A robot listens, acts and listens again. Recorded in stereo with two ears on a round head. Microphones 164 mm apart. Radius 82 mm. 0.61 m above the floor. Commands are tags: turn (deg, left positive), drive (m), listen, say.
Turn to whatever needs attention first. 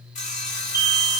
<turn deg="30"/>
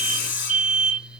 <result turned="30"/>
<turn deg="-15"/>
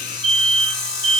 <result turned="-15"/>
<say>Facing the alarm, 2 to 4 m away.</say>